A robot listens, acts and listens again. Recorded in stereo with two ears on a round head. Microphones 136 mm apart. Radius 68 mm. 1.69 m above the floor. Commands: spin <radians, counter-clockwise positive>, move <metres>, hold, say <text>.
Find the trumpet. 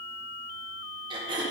hold
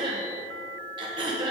hold
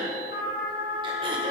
spin 1.05
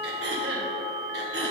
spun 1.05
spin 0.87
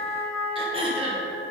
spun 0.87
say Facing the trumpet, 2 to 4 m away.